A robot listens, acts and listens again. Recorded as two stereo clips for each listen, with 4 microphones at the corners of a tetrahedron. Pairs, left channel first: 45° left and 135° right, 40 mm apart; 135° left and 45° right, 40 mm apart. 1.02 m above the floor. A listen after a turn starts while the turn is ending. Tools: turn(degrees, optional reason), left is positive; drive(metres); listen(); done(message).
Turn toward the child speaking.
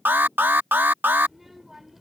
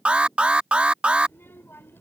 turn(degrees=140, reason="The child speaking: 140° left.")
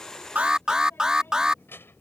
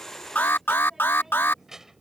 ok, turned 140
turn(degrees=30, reason="The child speaking is now 30° left.")
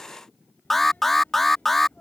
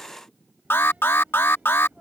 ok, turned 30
done("Found it: a child speaking, straight ahead.")